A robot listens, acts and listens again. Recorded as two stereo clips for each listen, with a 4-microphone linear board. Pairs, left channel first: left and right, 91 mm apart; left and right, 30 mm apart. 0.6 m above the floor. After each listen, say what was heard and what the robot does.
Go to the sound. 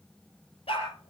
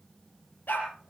Turn 90° left.
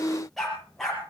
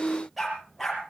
Drive 1.0 m forward.
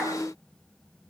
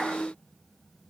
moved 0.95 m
Keep listening.
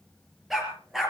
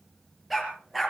Drive 1.0 m forward.
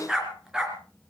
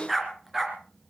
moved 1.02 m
Drive 1.0 m forward.
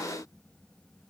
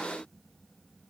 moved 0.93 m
Keep listening.
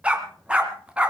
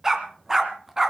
The dog barking is now 15° right. Turn 15° right.
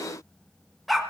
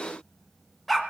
Drive 1.0 m forward.
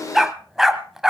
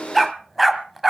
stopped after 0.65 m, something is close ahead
I am next to the dog barking.